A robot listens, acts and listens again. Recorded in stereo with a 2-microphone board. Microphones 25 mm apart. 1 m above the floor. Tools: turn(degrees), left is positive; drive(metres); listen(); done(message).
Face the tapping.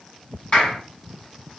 listen()
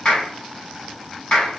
listen()
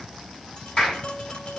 turn(degrees=45)
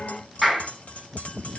turn(degrees=90)
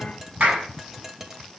turn(degrees=-20)
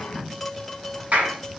done("Found it: tapping, straight ahead.")